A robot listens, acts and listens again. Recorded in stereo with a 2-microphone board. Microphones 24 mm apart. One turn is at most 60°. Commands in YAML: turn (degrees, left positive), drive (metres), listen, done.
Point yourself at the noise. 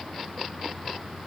listen: true
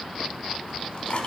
turn: 50
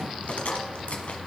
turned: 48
turn: 60
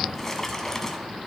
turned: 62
turn: 20
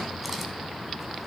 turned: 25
listen: true
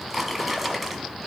done: "Found it: a drawer, straight ahead."